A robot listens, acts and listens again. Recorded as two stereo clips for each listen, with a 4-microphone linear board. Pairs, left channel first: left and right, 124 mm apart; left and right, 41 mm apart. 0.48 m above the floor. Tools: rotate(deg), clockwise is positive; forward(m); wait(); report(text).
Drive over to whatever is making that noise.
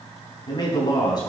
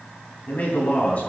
rotate(-35)
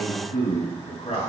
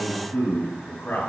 rotate(-110)
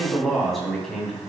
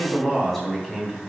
forward(1.0)
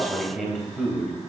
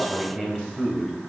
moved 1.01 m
forward(1.0)
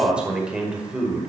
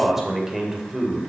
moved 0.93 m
rotate(10)
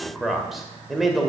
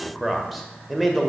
forward(1.0)
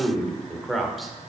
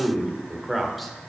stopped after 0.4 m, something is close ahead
report("I am next to the man speaking.")